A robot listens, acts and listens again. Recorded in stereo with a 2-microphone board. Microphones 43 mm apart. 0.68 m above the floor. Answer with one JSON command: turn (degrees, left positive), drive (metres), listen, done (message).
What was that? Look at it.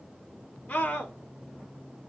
{"turn": 35}
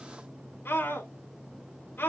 {"turn": 105}
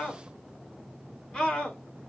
{"turn": 20}
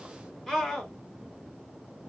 {"done": "Facing the scream, 2 to 4 m away."}